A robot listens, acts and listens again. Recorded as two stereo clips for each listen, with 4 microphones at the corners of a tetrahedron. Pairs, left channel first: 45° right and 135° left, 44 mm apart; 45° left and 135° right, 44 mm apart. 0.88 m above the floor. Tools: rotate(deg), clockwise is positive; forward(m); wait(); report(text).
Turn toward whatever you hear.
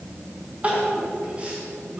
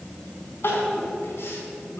rotate(-75)
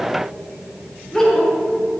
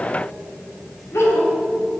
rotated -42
rotate(-35)
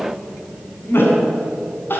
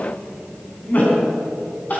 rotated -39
report("Found it: crying, straight ahead, over 4 m away.")